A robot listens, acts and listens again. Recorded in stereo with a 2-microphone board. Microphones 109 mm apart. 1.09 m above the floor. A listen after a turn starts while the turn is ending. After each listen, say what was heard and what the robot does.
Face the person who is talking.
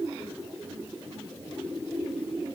Keep listening.
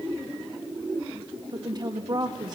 The woman speaking: about 40° right or 140° right. Turn 40° right.
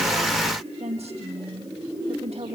So it is at 95° right. Turn 95° right.
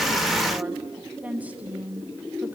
The woman speaking is now 15° right. Turn 15° right.
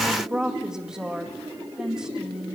Found it: a woman speaking, straight ahead, 1 to 2 m away.